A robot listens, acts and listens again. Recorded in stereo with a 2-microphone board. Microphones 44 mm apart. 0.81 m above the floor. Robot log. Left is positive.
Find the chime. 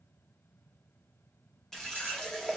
cmd idle
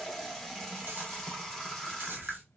cmd idle
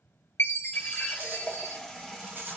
note: The chime: about 70° left or 110° left.
cmd yaw +70
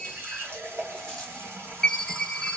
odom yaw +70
note: So it is at 10° left.
cmd yaw +10
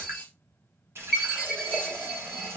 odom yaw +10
end: Found it: a chime, straight ahead, under 1 m away.